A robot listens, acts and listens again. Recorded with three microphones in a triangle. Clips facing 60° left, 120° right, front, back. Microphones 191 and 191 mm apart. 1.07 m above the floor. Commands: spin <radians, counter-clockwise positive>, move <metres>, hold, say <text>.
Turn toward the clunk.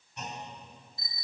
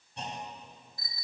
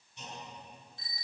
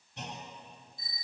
spin -3.05
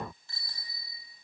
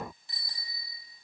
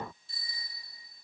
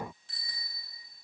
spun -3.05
say I heard a clunk from this way, but can't make it out now.